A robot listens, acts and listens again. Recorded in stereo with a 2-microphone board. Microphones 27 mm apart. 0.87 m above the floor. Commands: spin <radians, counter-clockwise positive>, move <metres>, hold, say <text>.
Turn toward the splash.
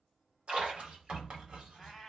spin -0.87
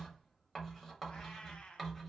hold
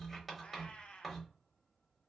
say I heard a splash, but can't make it out now. It was about straight ahead or 80° right.